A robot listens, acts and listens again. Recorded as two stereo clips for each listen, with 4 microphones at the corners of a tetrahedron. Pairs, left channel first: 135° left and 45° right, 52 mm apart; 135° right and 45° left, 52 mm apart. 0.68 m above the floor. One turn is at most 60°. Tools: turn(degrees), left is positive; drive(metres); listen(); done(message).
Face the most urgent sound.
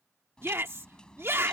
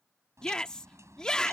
turn(degrees=-60)
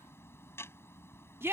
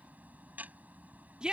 turn(degrees=-25)
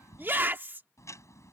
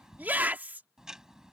done("Found it: a shout, straight ahead.")